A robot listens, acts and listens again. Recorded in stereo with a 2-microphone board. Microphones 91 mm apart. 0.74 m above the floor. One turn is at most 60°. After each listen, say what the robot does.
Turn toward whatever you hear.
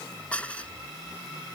Turn 15° left.
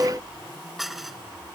Facing the dishes clattering.